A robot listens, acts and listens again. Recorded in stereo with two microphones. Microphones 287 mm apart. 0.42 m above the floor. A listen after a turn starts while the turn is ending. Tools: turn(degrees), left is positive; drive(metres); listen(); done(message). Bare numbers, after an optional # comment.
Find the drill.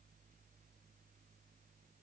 listen()
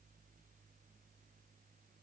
listen()
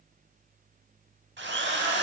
# The drill: about 40° right or 140° right.
turn(-40)
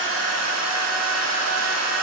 # So it is at 95° right.
turn(-95)
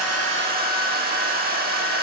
# The drill is now 35° right.
turn(-35)
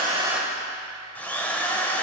done("Found it: a drill, straight ahead.")